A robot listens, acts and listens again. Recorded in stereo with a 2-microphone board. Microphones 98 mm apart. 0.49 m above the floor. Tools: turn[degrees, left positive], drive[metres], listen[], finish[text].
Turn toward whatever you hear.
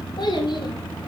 Thought: The child speaking: about 50° left or 130° left.
Action: turn[50]
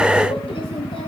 Action: listen[]
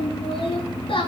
Thought: So it is at 70° left.
Action: turn[70]
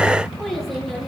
Action: listen[]
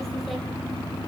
Action: listen[]
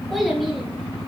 Action: finish[Facing the child speaking.]